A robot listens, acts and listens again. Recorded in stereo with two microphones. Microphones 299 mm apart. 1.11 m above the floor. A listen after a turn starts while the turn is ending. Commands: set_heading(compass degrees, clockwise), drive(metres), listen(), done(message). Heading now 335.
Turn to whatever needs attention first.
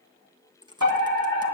set_heading(45)
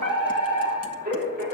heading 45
set_heading(75)
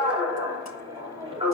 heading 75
set_heading(90)
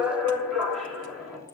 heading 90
done("Found it: a fire alarm, straight ahead.")